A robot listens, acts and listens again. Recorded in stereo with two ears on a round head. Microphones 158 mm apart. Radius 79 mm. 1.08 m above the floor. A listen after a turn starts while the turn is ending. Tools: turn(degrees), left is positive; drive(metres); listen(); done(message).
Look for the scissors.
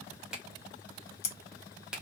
turn(degrees=55)
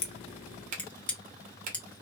turn(degrees=10)
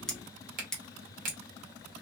done("Facing the scissors, under 1 m away.")